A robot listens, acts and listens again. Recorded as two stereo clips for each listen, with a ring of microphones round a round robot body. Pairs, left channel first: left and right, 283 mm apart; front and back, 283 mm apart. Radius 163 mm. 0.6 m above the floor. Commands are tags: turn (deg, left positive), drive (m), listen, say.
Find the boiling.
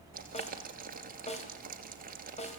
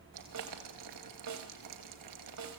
<turn deg="-150"/>
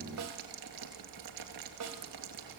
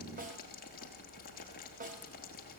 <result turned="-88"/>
<turn deg="-65"/>
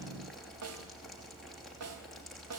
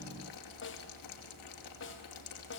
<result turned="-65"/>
<say>Facing the boiling, 2 to 4 m away.</say>